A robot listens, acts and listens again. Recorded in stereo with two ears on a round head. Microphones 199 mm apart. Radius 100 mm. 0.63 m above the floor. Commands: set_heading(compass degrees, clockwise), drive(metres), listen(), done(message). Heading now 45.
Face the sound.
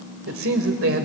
set_heading(105)
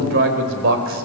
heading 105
set_heading(165)
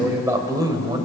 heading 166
set_heading(186)
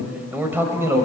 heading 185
set_heading(200)
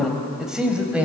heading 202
done("Found it: a man speaking, straight ahead.")